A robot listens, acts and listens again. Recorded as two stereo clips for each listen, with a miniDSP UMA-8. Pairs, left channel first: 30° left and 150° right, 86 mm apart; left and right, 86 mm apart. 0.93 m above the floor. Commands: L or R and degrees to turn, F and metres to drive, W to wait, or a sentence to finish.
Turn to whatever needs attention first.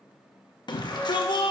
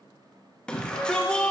L10
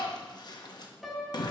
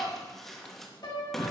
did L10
Facing the shout.